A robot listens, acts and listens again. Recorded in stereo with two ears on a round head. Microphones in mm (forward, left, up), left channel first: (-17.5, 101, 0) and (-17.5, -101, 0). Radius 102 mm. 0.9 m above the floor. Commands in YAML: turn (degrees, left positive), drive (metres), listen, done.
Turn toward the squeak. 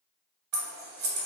listen: true
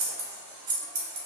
listen: true
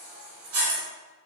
done: "I can't make out a squeak to turn to."